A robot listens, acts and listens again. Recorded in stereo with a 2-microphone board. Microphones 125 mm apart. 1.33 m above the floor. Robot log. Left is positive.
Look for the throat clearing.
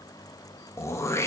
note: The throat clearing: about 25° left or 155° left.
cmd yaw +25
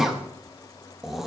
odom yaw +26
end: Found it: throat clearing, straight ahead, 1 to 2 m away.